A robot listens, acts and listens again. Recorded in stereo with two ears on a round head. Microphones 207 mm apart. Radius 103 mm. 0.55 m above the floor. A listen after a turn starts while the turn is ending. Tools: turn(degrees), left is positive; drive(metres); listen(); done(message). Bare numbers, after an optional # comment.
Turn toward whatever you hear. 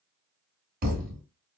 # The thud: about 40° right or 140° right.
turn(-40)
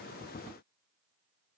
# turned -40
listen()
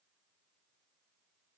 done("I heard a thud, but can't make it out now. It was about straight ahead or 100° right.")